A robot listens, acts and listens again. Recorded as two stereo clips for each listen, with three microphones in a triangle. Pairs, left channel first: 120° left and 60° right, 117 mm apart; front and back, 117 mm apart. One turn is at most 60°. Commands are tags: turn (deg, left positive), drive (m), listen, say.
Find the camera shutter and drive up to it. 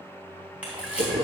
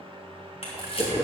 <turn deg="20"/>
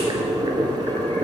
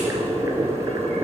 <listen/>
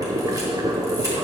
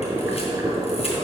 <listen/>
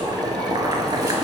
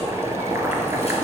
<say>I heard a camera shutter from this way, but can't make it out now. I did not reach it.</say>